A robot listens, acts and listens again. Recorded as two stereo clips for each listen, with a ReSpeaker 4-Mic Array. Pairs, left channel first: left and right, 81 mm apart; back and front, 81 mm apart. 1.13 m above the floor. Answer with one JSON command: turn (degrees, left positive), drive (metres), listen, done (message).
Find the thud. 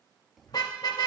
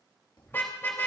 {"turn": -175}
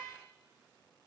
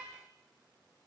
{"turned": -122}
{"turn": -55}
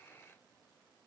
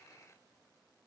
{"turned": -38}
{"turn": -15}
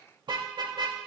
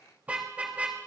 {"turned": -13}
{"done": "I heard a thud from this way, but can't make it out now."}